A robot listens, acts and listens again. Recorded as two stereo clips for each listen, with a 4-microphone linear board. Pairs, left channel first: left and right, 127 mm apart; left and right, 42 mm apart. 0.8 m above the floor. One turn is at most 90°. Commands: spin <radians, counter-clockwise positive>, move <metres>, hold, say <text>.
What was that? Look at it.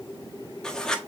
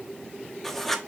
spin 0.52
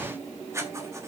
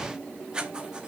spin -0.44
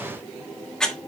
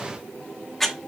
say Found it: writing, straight ahead, 1 to 2 m away.